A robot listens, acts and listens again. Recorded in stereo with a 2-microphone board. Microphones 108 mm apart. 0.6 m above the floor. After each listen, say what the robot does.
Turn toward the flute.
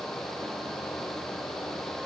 Keep listening.
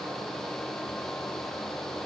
Keep listening.
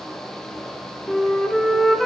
Turn 30° left.
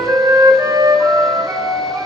Turn 30° right.
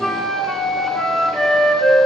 Found it: a flute, straight ahead.